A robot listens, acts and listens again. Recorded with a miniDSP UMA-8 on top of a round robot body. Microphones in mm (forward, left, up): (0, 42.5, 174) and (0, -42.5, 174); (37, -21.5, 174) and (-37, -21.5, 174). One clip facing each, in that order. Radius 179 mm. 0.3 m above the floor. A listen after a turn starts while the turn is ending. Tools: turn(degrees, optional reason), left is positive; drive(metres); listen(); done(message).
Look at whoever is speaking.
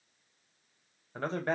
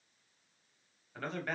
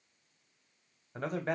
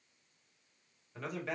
turn(degrees=35, reason="The man speaking: 35° left.")
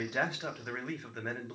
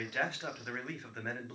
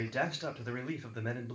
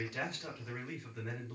done("Facing the man speaking, 1 to 2 m away.")